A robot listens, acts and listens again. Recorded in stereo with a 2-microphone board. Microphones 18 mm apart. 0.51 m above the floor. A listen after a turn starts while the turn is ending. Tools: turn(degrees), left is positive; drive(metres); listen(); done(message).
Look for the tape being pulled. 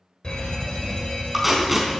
turn(degrees=-25)
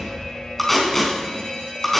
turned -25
done("Facing the tape being pulled, over 4 m away.")